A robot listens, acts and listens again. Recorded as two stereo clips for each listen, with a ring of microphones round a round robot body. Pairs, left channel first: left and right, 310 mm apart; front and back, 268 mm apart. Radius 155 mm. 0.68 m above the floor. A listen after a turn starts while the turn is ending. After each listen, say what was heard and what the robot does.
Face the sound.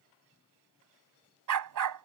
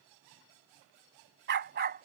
The dog barking: 120° right. Turn 120° right.
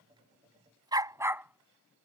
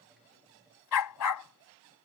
Facing the dog barking.